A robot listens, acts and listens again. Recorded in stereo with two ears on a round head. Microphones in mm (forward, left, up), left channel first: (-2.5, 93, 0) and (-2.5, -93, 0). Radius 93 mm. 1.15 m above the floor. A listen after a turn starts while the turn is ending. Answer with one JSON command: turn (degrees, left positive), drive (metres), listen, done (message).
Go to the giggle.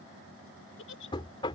{"turn": 65}
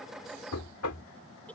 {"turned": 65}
{"listen": true}
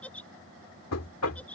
{"drive": 1.0}
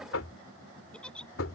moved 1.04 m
{"drive": 1.0}
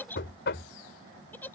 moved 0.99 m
{"turn": 10}
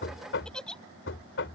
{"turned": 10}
{"drive": 1.0}
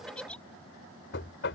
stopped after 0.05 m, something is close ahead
{"done": "I am next to the giggle."}